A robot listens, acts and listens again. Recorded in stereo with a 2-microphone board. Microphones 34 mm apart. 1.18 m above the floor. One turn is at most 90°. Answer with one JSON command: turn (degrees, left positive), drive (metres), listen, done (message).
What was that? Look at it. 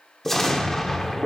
{"turn": 30}
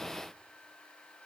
{"listen": true}
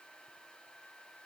{"done": "I heard an explosion, but can't make it out now. It was about 20° right or 140° left."}